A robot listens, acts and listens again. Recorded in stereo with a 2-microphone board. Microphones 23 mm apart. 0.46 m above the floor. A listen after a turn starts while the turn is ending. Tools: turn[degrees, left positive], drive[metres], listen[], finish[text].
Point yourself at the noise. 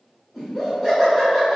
Action: turn[30]
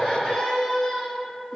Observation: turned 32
Thought: So it is at 145° left.
Action: turn[145]
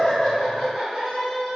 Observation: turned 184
Thought: The laughter is now 35° right.
Action: turn[-35]
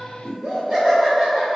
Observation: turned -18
Thought: The laughter is now 20° right.
Action: turn[-20]
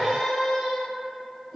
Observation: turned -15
Action: finish[Found it: laughter, straight ahead.]